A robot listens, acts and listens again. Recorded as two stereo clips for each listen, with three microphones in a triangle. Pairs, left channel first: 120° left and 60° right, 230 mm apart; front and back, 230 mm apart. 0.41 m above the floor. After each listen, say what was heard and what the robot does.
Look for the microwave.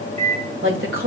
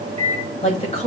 The microwave: 120° right. Turn 120° right.
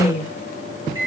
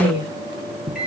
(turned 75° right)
The microwave is now 45° right. Turn 45° right.
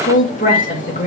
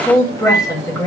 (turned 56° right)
Nothing new. It was at 10° left. Turn 10° left.
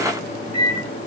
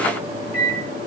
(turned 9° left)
Found it: a microwave, straight ahead.